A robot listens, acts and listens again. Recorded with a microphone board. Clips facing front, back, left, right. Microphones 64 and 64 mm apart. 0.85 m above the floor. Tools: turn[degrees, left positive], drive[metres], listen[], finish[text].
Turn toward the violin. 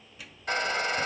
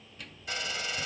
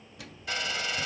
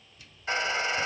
Action: listen[]
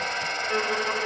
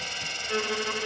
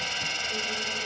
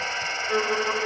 Thought: The violin: 75° right.
Action: turn[-75]
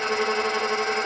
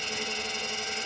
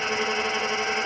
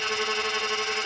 Thought: The violin is now 10° right.
Action: turn[-10]
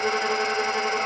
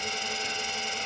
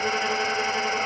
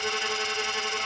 Action: listen[]
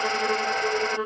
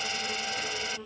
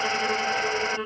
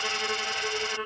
Action: finish[Facing the violin.]